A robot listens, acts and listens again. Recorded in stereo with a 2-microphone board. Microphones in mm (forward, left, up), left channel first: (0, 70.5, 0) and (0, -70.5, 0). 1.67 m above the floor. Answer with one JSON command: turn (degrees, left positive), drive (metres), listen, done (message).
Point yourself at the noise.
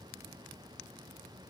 {"listen": true}
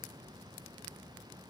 {"listen": true}
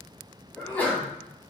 {"turn": 30}
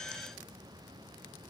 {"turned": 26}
{"listen": true}
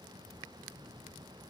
{"done": "I heard a sneeze, but can't make it out now. It was about 15° right or 140° left."}